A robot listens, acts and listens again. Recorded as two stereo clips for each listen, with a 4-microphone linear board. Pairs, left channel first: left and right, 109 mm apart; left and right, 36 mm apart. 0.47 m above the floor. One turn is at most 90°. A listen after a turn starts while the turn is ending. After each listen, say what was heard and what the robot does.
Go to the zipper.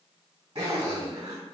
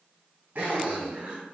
The zipper: about 65° right or 115° right. Turn 65° right.
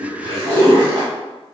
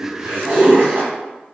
So it is at 50° right. Turn 50° right.
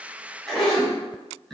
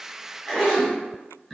Drive 1.0 m forward.
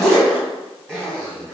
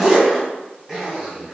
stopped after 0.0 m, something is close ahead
Something is in my way. I am facing the zipper but have not reached it.